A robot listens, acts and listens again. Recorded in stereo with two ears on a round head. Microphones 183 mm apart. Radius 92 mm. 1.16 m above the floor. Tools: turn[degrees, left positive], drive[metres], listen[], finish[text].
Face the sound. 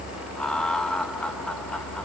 Action: turn[30]
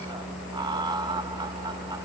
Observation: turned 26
Thought: So it is at 20° right.
Action: turn[-20]
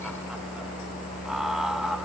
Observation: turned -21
Action: listen[]
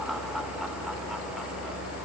Action: listen[]
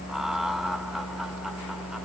Action: finish[Facing where the laughter came from. I can't hear it now.]